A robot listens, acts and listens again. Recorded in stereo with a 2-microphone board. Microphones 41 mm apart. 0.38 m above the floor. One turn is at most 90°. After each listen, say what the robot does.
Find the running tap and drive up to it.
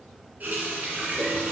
Turn 45° right.
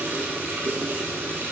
Turn 90° right.
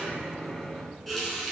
Drive 1.0 m forward.
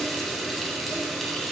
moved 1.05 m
Drive 1.0 m forward.
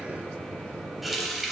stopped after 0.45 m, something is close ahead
I am next to the running tap.